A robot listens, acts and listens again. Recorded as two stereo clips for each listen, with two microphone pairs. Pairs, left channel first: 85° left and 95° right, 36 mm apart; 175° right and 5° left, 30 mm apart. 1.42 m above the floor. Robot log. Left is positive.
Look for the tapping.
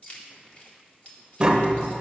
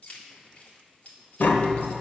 note: The tapping: 165° right.
cmd yaw -165
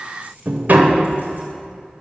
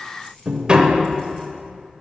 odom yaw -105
note: The tapping is now 60° right.
cmd yaw -60
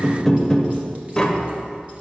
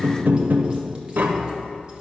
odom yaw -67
note: The tapping is now 10° left.
cmd yaw +10
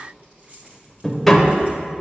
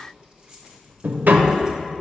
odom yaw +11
end: Facing the tapping.